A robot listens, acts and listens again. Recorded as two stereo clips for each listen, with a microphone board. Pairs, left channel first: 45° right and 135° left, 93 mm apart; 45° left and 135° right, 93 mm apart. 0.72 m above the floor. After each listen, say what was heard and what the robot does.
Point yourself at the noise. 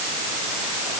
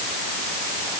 Keep listening.
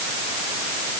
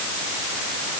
Keep listening.
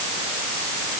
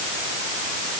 I can't make out anything.